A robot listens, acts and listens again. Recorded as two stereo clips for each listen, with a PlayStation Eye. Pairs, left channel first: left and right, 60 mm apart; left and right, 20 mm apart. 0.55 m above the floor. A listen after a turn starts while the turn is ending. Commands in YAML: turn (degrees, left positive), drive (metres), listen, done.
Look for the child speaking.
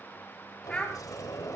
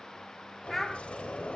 turn: 30
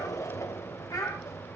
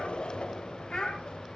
turn: 120
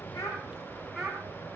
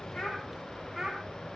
done: "Found it: a child speaking, straight ahead."